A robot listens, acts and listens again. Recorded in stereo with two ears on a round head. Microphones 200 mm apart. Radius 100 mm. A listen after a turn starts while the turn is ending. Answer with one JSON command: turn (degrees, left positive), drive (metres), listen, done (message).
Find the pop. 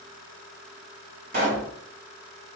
{"turn": -45}
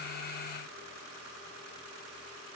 {"listen": true}
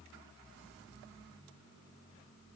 {"done": "I heard a pop, but can't make it out now. It was about straight ahead or 90° right."}